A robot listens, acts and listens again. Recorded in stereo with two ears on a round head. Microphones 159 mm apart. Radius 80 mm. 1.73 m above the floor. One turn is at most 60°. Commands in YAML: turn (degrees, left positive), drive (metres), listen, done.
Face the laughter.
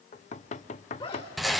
turn: 35
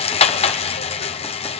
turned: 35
listen: true
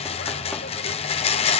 listen: true
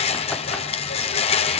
done: "I heard laughter, but can't make it out now. It was about straight ahead or 110° left."